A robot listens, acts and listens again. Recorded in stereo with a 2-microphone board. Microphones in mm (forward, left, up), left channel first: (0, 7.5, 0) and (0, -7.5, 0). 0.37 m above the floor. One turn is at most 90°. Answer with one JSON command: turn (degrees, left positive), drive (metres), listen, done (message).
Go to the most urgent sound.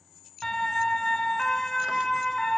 {"turn": 35}
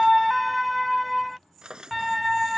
{"drive": 1.0}
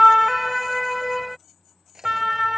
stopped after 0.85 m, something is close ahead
{"done": "Arrived at the siren, straight ahead."}